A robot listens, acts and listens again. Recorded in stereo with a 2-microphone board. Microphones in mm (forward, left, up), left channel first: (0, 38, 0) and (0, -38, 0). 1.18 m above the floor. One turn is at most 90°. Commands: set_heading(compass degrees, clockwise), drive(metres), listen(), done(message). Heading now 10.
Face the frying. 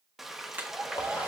set_heading(40)
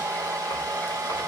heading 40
listen()
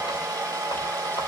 listen()
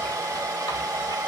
done("I heard frying, but can't make it out now. It was about 25° left or 145° right.")